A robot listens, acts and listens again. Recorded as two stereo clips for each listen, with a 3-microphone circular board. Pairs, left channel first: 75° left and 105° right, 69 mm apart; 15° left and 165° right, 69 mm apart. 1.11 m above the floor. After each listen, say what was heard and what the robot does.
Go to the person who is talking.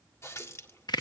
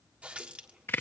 Keep listening.
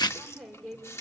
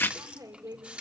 The woman speaking: 165° left. Turn 165° left.
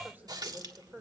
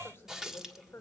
The woman speaking is now 40° right. Turn 40° right.
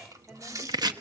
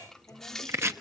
The woman speaking is now 25° right. Turn 25° right.
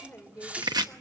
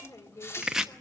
The woman speaking is now 10° left. Turn 10° left.
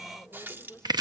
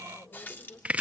Drive 1.0 m forward.
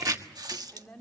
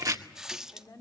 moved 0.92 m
Drive 1.0 m forward.
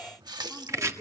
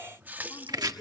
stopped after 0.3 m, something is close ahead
The woman speaking is now 10° right. Turn 10° right.
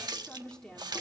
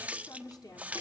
Something is in my way. I am facing the woman speaking but have not reached it.